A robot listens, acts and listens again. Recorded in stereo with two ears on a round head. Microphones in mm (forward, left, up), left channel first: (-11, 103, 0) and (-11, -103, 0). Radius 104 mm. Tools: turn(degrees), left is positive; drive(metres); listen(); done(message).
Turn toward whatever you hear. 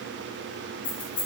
turn(degrees=20)
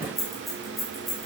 done("Found it: keys jangling, straight ahead.")